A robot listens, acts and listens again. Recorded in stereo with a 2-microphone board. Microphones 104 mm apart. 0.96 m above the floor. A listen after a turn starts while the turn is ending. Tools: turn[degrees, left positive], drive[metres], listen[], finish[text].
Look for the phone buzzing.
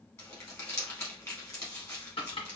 Action: listen[]
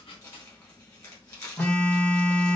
Action: turn[30]
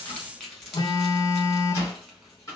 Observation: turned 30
Thought: So it is at 135° left.
Action: turn[135]
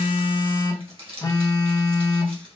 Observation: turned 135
Thought: The phone buzzing is now 45° left.
Action: turn[45]
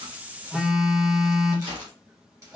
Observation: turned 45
Action: finish[Found it: a phone buzzing, straight ahead, under 1 m away.]